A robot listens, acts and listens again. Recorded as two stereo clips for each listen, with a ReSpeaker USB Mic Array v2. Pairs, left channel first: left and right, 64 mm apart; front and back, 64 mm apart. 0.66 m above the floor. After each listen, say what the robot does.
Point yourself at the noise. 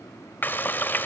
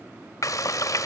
Turn 30° left.
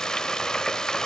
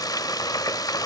Turn 10° left.
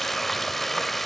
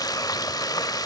Facing the frying.